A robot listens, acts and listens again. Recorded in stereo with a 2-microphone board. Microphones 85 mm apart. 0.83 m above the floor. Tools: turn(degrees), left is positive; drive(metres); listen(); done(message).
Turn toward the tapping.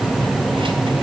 listen()
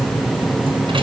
listen()
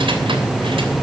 done("I can't make out tapping.")